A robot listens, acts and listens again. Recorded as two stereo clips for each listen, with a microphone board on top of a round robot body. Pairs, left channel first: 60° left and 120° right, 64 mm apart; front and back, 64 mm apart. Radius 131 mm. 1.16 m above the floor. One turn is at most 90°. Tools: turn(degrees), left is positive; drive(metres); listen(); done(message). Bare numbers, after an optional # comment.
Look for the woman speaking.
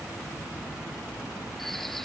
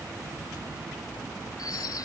listen()
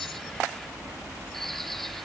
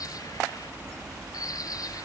listen()
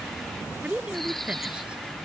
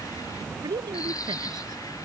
# The woman speaking: 165° left.
turn(90)
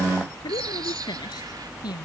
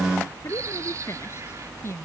# The woman speaking is now 55° left.
turn(55)
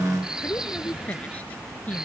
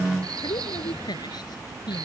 # The woman speaking is now 10° right.
turn(-10)
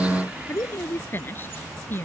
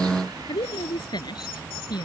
done("Facing the woman speaking.")